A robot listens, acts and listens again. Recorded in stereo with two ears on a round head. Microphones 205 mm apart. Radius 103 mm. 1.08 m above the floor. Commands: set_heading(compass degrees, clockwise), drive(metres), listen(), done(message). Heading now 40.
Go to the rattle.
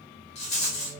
set_heading(10)
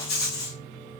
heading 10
set_heading(250)
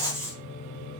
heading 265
set_heading(250)
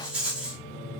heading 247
drive(1.0)
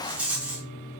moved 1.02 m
drive(1.0)
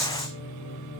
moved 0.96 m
drive(1.0)
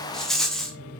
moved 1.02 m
drive(1.0)
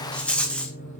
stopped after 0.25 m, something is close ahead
done("I am next to the rattle.")